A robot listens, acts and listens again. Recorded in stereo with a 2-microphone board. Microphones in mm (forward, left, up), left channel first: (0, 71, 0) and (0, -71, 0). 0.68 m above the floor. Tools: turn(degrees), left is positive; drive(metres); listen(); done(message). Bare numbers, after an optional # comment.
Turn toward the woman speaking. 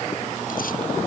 listen()
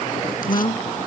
# The woman speaking: about 35° left or 145° left.
turn(35)
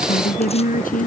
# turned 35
# So it is at 110° left.
turn(110)
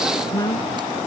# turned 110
# The woman speaking is now 25° left.
turn(25)
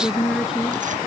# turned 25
done("Found it: a woman speaking, straight ahead.")